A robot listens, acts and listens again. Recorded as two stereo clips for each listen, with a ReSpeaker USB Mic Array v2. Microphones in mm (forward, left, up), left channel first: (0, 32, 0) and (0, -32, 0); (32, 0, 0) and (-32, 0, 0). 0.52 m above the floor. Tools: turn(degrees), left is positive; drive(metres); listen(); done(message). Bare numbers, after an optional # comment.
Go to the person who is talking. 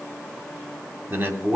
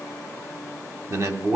# The man speaking: 150° right.
turn(-150)
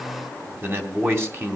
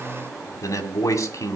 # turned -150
# The man speaking is now 40° right.
turn(-40)
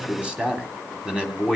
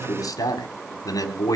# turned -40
# The man speaking is now 15° right.
turn(-15)
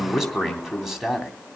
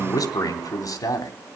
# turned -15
drive(1.0)
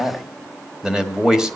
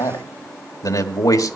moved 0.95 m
# The man speaking is now 10° right.
turn(-10)
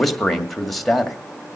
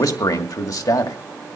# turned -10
drive(1.0)
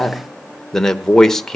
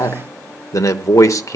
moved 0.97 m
# The man speaking is now 10° left.
turn(10)
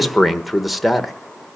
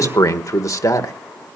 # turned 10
drive(1.0)
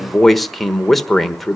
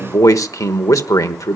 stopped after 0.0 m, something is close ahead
done("Arrived at the man speaking, straight ahead.")